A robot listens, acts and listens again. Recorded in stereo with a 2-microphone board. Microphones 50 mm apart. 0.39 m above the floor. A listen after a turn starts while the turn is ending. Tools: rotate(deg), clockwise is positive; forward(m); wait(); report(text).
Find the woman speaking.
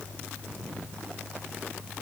wait()
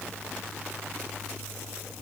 wait()
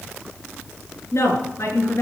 rotate(-75)
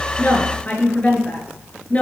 rotate(-25)
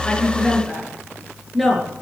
report("Facing the woman speaking.")